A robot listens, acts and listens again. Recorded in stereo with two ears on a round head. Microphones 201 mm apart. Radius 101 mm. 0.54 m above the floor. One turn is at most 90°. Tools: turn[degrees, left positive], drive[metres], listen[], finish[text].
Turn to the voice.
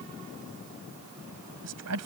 Thought: The woman speaking: about 75° right or 105° right.
Action: turn[-75]
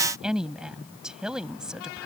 Action: finish[Facing the woman speaking.]